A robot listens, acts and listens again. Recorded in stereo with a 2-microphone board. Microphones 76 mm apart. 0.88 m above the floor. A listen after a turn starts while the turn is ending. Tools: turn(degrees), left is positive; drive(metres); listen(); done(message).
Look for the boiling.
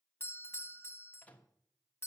listen()
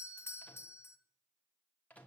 listen()
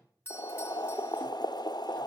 turn(degrees=65)
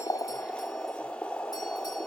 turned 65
turn(degrees=15)
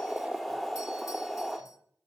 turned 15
done("Facing the boiling.")